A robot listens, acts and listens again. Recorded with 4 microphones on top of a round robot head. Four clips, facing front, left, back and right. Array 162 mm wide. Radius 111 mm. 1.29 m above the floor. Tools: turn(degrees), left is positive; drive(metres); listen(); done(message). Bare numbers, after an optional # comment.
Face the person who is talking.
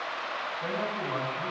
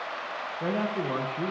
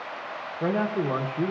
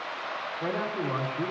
# The man speaking: 160° left.
turn(160)
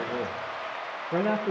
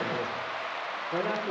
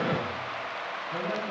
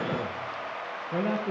# The man speaking is now 10° right.
turn(-10)
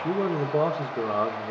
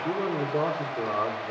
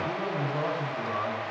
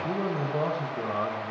done("Found it: a man speaking, straight ahead, 1 to 2 m away.")